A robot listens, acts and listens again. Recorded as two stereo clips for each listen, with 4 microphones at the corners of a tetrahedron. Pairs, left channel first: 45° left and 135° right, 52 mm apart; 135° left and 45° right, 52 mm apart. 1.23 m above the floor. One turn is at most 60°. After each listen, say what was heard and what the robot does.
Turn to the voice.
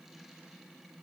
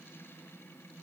Keep listening.
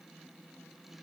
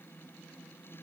Keep listening.
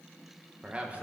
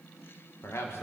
The man speaking: 165° left. Turn 60° left.
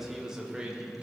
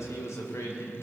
The man speaking is now 160° left. Turn 60° left.
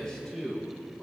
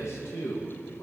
The man speaking is now 130° left. Turn 60° left.
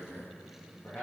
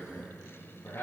The man speaking is now 100° left. Turn 60° left.
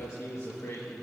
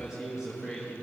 The man speaking is now 30° left. Turn 30° left.
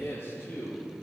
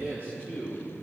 Found it: a man speaking, straight ahead.